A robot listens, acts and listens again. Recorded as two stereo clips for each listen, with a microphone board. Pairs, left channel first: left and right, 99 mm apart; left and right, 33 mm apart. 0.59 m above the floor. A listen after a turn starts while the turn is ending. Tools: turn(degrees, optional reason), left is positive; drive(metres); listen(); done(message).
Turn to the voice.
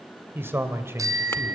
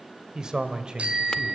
turn(degrees=-25, reason="The man speaking: about 25° right or 155° right.")
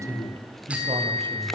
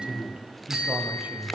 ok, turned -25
turn(degrees=-125, reason="So it is at 125° right.")
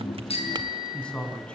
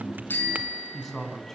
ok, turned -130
turn(degrees=10, reason="The man speaking is now 10° left.")
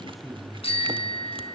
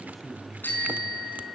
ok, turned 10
done("Facing the man speaking, over 4 m away.")